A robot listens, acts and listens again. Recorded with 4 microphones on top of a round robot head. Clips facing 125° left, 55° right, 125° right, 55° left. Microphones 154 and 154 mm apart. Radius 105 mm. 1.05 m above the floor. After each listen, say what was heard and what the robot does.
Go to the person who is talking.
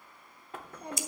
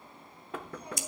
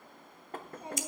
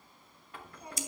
The child speaking: 170° left. Turn 170° left.
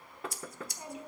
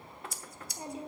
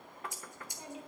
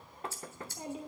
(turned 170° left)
Drive 1.0 m forward.
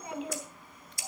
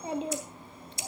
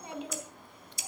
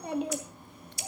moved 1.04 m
The child speaking is now 10° left. Turn 10° left.
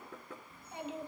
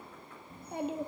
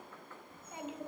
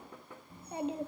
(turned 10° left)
Drive 1.0 m forward.
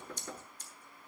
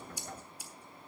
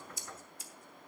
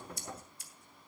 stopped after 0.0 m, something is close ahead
Keep listening.
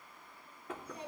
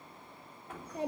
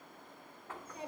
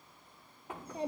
I am next to the child speaking.